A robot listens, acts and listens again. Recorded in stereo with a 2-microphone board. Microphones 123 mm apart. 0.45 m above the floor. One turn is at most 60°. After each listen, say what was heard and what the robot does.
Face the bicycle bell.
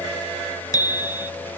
The bicycle bell: about 30° left or 150° left. Turn 30° left.
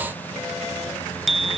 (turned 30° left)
Found it: a bicycle bell, straight ahead.